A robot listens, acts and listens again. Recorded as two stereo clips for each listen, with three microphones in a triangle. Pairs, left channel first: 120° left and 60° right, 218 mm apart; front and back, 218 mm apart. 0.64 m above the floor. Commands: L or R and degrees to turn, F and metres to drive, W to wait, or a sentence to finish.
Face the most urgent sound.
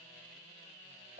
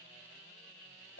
W
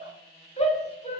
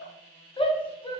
L65
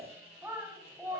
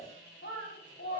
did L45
L20
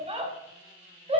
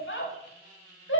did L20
Facing the shout, 1 to 2 m away.